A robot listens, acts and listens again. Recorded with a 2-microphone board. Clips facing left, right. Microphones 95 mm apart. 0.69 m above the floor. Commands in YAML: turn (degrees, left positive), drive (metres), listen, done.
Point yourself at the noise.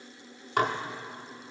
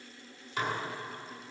turn: 60
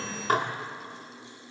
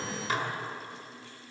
turn: 55
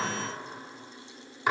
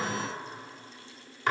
turn: 10
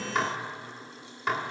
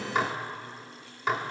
done: "Found it: dishes clattering, straight ahead, 1 to 2 m away."